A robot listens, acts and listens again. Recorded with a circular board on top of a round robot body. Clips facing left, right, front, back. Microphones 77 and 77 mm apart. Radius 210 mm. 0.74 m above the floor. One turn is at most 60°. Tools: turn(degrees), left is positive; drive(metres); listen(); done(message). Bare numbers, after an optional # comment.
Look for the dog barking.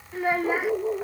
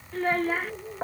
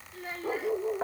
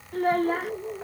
# The dog barking: 70° left.
turn(60)
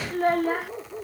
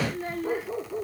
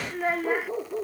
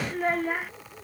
done("Found it: a dog barking, straight ahead.")